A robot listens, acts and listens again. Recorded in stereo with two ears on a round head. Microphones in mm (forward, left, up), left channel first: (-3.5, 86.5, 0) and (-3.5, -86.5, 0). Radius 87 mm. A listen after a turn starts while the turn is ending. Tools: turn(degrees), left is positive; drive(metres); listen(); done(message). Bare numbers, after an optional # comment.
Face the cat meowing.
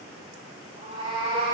# The cat meowing: about 30° right or 150° right.
turn(-30)
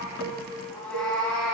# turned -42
done("Found it: a cat meowing, straight ahead, 2 to 4 m away.")